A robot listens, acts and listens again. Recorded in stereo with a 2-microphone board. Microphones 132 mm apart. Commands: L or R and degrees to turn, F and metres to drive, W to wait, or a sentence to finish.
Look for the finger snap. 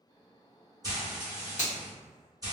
L65
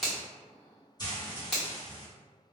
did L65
Facing the finger snap, 1 to 2 m away.